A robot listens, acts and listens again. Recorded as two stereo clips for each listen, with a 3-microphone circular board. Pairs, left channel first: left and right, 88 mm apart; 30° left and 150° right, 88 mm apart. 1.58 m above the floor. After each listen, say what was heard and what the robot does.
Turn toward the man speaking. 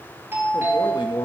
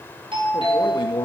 The man speaking: 60° left. Turn 60° left.
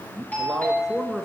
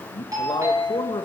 Facing the man speaking, 1 to 2 m away.